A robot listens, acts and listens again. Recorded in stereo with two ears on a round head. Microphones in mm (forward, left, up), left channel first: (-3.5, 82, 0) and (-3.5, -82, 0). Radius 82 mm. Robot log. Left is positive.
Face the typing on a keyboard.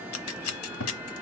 cmd idle
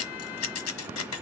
cmd idle
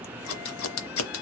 end: I can't make out typing on a keyboard, only scissors.